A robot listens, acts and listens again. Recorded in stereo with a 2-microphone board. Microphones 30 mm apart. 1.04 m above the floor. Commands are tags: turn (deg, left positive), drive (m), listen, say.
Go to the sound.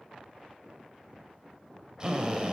<turn deg="-20"/>
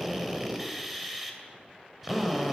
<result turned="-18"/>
<drive m="1.0"/>
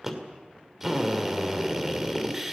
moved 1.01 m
<turn deg="-10"/>
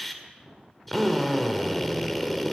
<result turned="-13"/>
<drive m="1.0"/>
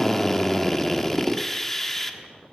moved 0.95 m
<turn deg="10"/>
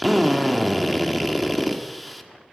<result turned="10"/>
<drive m="1.0"/>
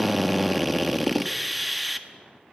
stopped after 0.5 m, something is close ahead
<say>I am next to the drill.</say>